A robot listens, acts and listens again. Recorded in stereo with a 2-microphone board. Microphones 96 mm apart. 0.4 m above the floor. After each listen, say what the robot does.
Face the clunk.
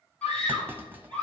Turn 20° right.
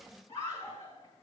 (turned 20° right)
Keep listening.
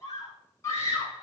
I heard a clunk, but can't make it out now. It was about straight ahead or 140° right.